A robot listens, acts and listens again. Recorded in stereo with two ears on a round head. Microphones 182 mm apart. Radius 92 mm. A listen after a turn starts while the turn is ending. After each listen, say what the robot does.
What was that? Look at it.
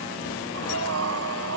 Turn 90° right.
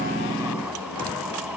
Keep listening.
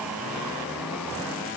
Keep listening.
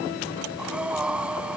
Found it: breathing, straight ahead.